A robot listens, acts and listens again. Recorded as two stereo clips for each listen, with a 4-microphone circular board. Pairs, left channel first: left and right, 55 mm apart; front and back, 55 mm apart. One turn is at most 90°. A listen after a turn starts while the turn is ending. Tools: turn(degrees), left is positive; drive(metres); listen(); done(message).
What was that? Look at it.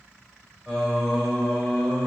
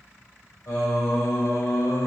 turn(degrees=-15)
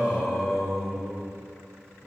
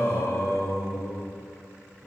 turn(degrees=-15)
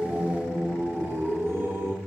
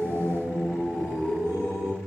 turn(degrees=-35)
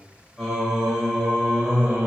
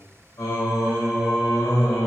turn(degrees=-10)
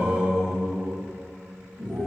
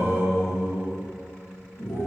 done("Found it: singing, straight ahead.")